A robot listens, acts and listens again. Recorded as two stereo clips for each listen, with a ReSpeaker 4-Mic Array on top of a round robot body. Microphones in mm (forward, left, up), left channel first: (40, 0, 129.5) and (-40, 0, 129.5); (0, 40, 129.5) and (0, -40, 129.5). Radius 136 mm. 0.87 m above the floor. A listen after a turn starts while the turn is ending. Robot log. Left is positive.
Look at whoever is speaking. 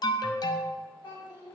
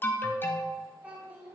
note: The child speaking: 20° right.
cmd yaw -20
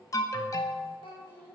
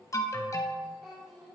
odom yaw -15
end: Found it: a child speaking, straight ahead.